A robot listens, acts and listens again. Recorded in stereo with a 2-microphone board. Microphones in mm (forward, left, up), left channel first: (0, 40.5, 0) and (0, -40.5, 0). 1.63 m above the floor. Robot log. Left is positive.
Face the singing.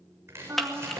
note: The singing: about 40° right or 140° right.
cmd yaw -40
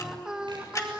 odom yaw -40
note: So it is at 15° right.
cmd yaw -15
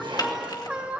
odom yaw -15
note: The singing is now 15° right.
cmd yaw -15
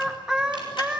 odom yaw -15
note: The singing is now 20° right.
cmd yaw -20
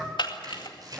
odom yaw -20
note: The singing is now 20° right.
cmd yaw -20
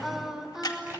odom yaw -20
end: Found it: singing, straight ahead, 2 to 4 m away.